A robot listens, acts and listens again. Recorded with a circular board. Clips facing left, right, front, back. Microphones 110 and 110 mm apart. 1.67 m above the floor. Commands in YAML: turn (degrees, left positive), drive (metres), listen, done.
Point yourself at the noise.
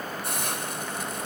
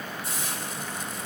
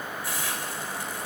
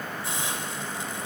turn: 115
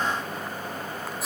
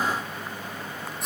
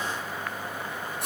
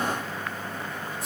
done: "Facing the hiss, 2 to 4 m away."